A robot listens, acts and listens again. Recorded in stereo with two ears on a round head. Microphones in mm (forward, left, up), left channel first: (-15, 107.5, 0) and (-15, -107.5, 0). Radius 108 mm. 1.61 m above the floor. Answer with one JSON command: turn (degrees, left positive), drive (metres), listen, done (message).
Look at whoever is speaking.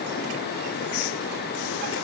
{"listen": true}
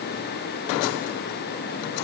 {"listen": true}
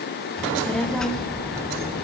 {"turn": 30}
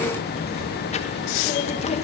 {"turn": 150}
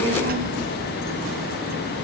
{"turn": -45}
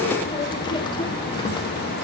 {"turn": 20}
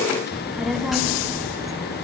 {"done": "Found it: a child speaking, straight ahead."}